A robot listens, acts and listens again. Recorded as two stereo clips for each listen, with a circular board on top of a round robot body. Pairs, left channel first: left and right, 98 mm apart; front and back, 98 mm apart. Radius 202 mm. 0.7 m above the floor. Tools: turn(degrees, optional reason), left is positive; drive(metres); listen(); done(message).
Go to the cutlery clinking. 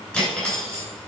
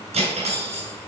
turn(degrees=170, reason="The cutlery clinking: 170° left.")
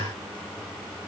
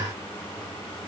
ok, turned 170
listen()
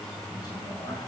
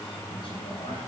turn(degrees=40, reason="The cutlery clinking is now 40° left.")
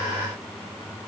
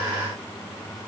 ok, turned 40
listen()
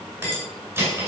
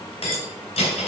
turn(degrees=-25, reason="The cutlery clinking is now 25° right.")
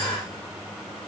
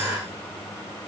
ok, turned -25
listen()
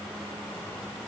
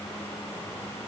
listen()
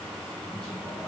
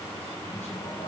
done("Facing where the cutlery clinking came from. I can't hear it now. I did not reach it.")